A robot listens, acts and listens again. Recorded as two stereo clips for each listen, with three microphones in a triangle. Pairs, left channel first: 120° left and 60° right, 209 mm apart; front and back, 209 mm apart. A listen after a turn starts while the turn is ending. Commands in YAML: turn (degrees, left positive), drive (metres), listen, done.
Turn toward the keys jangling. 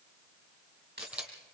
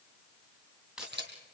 turn: -95
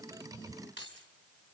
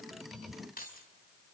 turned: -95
turn: -40
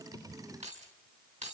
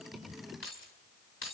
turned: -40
done: "Facing the keys jangling."